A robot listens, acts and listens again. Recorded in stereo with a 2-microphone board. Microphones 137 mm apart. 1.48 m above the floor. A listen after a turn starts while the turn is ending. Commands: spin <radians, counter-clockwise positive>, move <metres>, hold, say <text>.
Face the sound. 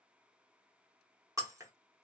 spin -0.44
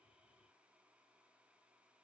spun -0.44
hold
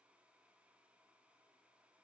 say I heard breaking glass, but can't make it out now. It was about straight ahead or 130° right.